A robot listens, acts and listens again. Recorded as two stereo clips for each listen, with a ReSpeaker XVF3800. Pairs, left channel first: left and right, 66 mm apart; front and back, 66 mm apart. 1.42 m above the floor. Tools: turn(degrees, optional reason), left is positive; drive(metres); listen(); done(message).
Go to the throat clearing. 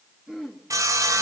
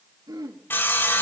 turn(degrees=-170, reason="The throat clearing: 170° right.")
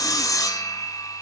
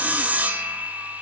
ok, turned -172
listen()
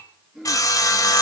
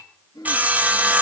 drive(metres=1.0)
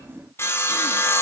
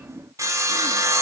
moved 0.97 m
listen()
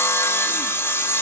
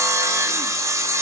listen()
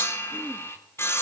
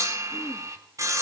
done("Facing where the throat clearing came from. I can't hear it now. I did not reach it.")